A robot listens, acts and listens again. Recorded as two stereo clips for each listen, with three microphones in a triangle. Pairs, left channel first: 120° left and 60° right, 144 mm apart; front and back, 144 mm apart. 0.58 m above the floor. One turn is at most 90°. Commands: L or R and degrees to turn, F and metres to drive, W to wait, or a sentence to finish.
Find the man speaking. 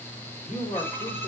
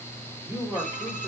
L90
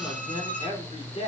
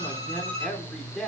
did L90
L90
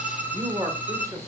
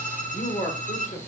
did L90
Found it: a man speaking, straight ahead.